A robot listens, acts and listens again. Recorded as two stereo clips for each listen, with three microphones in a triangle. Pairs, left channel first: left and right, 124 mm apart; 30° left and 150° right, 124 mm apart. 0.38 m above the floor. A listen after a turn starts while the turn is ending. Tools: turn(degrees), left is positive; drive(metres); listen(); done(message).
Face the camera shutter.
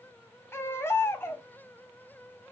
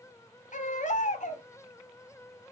listen()
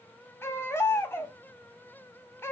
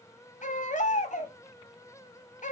listen()
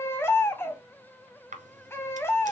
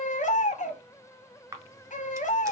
turn(degrees=-85)
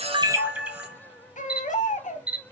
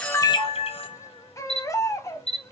turn(degrees=-10)
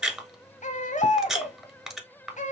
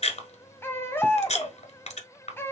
done("Found it: a camera shutter, straight ahead, 1 to 2 m away.")